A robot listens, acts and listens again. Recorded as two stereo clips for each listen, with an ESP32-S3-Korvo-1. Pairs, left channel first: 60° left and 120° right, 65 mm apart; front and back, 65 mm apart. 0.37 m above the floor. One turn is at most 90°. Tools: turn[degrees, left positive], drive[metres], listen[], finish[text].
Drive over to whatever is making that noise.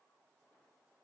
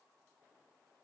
Action: listen[]
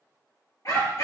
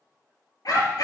Thought: The dog barking: 25° left.
Action: turn[25]
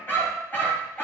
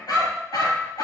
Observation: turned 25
Action: drive[1.0]
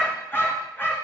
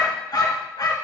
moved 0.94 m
Action: drive[1.0]
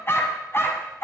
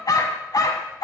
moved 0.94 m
Thought: The dog barking is now 10° left.
Action: turn[10]
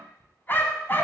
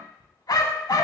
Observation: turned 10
Action: drive[1.0]
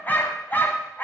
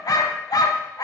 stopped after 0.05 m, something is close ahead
Action: finish[I am next to the dog barking.]